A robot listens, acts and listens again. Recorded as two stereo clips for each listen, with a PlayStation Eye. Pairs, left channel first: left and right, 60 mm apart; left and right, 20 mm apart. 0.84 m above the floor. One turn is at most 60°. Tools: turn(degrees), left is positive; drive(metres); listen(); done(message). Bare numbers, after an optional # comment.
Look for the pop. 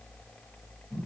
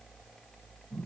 listen()
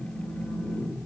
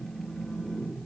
listen()
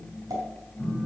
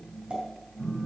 turn(-60)
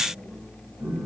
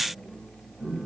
# Nothing new. It was at 30° right.
turn(-30)
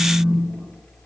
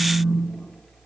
done("I heard a pop from this way, but can't make it out now.")